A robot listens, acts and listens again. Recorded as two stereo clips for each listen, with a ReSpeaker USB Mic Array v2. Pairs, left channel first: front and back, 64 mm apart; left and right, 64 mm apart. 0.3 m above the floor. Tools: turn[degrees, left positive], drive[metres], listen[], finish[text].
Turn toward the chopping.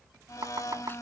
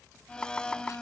Thought: The chopping: 160° left.
Action: turn[160]
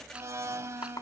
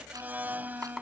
Action: finish[Found it: chopping, straight ahead.]